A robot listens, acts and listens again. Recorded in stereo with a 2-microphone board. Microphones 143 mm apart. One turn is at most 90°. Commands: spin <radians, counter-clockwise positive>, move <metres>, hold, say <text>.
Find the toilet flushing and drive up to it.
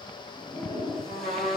spin 0.52
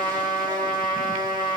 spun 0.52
hold
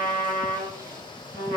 hold
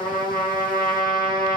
say I heard a toilet flushing, but can't make it out now. It was about 25° right or 145° left. I did not reach it.